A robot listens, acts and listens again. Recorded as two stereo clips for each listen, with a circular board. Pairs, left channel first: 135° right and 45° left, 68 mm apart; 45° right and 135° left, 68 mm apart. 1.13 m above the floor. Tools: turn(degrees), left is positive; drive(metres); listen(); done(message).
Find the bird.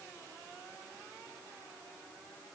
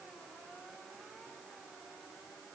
listen()
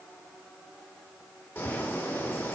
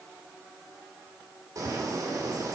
turn(degrees=170)
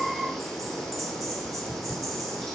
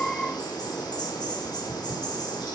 turn(degrees=-45)
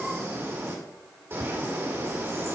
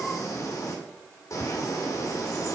done("Facing the bird.")